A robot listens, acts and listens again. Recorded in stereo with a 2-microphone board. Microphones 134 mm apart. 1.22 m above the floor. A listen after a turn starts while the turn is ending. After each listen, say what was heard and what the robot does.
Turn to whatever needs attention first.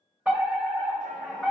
Turn 30° right.
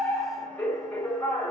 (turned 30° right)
So it is at 20° left. Turn 20° left.
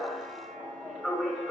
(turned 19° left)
Facing the fire alarm.